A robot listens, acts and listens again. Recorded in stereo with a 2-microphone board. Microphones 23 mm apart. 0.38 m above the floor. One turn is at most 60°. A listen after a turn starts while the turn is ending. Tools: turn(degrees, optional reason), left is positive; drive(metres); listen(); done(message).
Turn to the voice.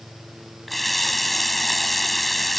listen()
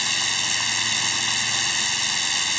listen()
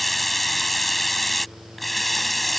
done("I can't make out anyone speaking to turn to.")